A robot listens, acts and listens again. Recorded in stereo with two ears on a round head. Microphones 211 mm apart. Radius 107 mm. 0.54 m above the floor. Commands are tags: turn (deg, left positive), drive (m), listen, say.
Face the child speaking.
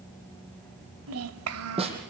<turn deg="-70"/>
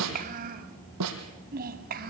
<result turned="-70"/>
<turn deg="-40"/>
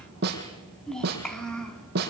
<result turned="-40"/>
<say>Found it: a child speaking, straight ahead, 2 to 4 m away.</say>